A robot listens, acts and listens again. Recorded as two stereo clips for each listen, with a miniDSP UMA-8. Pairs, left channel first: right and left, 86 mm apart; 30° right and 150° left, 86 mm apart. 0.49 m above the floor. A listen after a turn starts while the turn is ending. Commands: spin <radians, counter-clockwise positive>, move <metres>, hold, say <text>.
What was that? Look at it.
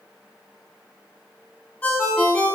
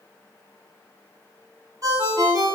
spin -2.79
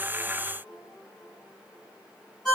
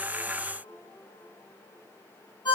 say Facing the ringtone, 2 to 4 m away.